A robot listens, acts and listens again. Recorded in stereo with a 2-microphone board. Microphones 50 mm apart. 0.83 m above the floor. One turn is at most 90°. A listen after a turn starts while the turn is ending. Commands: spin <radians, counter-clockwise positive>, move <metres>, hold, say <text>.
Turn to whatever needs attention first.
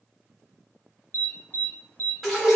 spin 0.52
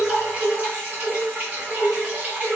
hold
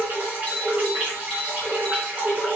say Found it: an alarm, straight ahead.